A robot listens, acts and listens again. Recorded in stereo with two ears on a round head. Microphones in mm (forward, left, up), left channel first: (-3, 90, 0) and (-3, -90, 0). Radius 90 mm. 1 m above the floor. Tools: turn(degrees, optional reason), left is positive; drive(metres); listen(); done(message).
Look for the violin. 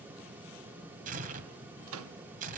listen()
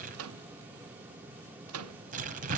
listen()
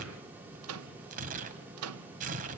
done("I can't make out a violin, only a microwave and tearing paper.")